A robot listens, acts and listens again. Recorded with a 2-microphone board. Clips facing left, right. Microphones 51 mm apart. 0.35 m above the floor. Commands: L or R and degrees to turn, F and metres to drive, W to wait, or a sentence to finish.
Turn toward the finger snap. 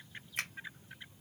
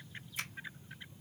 L50
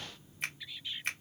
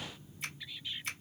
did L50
L70
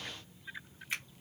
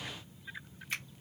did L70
L15
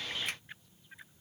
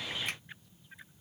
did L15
W
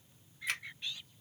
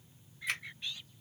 W
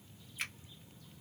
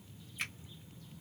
Facing the finger snap.